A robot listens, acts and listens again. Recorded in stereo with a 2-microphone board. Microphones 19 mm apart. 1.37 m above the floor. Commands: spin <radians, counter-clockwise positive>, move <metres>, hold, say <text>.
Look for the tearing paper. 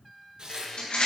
spin -0.87
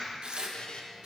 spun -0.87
spin -1.31
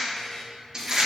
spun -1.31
hold
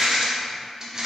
hold
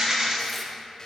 say Facing where the tearing paper came from. I can't hear it now.